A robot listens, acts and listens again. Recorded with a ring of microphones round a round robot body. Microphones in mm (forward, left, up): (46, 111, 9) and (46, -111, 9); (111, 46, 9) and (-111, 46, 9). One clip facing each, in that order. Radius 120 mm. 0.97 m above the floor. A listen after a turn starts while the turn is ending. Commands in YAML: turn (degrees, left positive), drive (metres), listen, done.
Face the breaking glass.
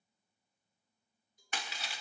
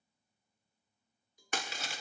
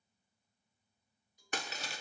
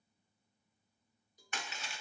turn: -55
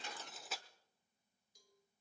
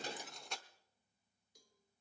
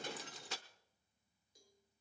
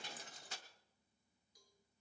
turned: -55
done: "Found it: breaking glass, straight ahead, under 1 m away."